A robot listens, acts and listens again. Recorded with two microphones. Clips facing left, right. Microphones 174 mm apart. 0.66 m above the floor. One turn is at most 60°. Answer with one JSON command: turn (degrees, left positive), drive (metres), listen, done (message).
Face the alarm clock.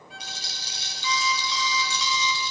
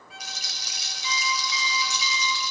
{"turn": 60}
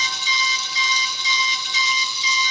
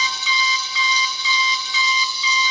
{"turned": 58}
{"turn": 40}
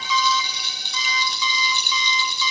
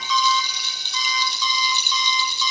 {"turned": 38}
{"done": "Found it: an alarm clock, straight ahead."}